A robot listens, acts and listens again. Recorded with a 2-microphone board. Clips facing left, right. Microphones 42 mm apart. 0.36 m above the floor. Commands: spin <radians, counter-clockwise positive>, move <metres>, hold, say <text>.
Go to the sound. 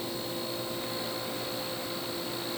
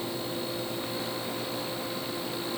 hold
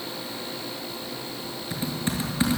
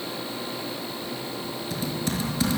spin 0.44
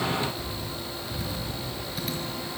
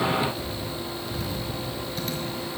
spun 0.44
move 1.0
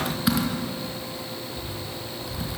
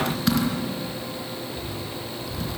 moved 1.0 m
spin 0.17
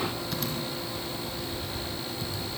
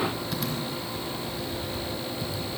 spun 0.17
move 1.0
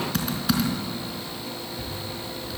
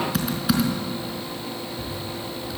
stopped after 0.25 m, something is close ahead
say Something is in my way. I am facing the typing on a keyboard but have not reached it.